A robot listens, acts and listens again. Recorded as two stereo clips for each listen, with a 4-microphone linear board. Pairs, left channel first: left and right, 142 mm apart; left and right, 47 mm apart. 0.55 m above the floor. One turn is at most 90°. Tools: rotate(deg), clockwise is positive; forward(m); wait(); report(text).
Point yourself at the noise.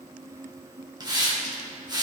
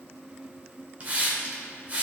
rotate(30)
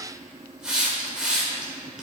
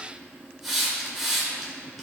report("Found it: a hiss, straight ahead, 2 to 4 m away.")